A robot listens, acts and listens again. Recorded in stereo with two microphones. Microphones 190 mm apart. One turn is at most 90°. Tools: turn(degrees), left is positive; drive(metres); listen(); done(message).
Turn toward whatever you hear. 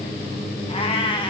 turn(degrees=25)
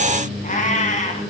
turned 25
turn(degrees=40)
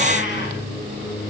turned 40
listen()
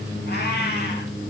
turn(degrees=90)
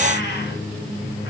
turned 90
turn(degrees=70)
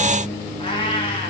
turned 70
turn(degrees=25)
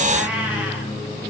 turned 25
turn(degrees=-10)
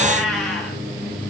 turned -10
done("Found it: a cat meowing, straight ahead.")